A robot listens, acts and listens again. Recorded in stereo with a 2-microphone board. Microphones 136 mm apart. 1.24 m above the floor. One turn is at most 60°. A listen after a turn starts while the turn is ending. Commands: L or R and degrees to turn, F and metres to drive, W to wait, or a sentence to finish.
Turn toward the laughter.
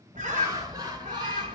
R30
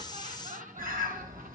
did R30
R60
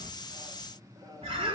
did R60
R25
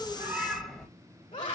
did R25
L40
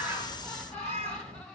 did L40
Facing the laughter.